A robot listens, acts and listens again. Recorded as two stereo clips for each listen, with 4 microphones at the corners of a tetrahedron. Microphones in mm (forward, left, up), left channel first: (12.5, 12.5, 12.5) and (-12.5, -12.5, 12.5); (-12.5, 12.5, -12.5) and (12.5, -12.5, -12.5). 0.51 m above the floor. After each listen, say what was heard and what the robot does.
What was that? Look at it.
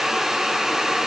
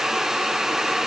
Keep listening.
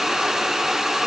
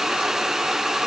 Keep listening.
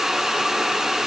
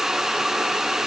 I can't make out anything.